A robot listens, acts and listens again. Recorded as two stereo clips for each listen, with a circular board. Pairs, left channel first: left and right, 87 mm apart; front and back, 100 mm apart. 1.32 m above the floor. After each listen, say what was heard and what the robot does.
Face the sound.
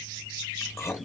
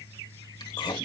The chewing: 35° left. Turn 35° left.
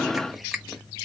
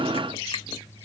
Keep listening.
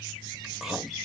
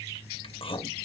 Found it: chewing, straight ahead.